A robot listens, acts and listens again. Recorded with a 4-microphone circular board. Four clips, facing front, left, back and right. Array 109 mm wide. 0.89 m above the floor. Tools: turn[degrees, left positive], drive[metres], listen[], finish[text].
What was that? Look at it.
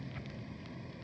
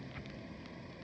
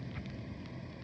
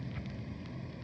Action: listen[]
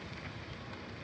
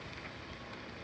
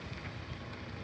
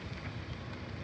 Action: listen[]
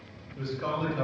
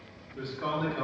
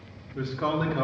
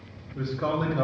Thought: The man speaking: 170° right.
Action: turn[-170]
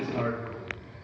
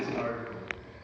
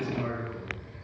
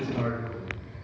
Thought: The man speaking is now 35° right.
Action: turn[-35]
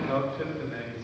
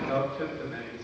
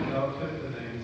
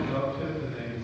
Thought: The man speaking is now 15° left.
Action: turn[15]
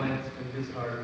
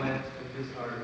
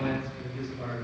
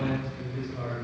Action: finish[Found it: a man speaking, straight ahead.]